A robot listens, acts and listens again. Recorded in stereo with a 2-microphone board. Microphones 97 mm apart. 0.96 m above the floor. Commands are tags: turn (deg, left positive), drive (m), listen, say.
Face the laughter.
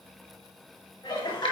<turn deg="50"/>
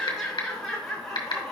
<say>Facing the laughter.</say>